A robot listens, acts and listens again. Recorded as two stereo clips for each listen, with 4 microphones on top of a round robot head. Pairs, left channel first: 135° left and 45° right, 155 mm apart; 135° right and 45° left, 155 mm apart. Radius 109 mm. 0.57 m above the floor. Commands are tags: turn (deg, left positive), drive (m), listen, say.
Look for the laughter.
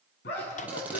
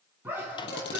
<turn deg="120"/>
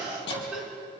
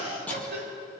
<turn deg="35"/>
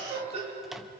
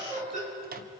<say>Found it: laughter, straight ahead.</say>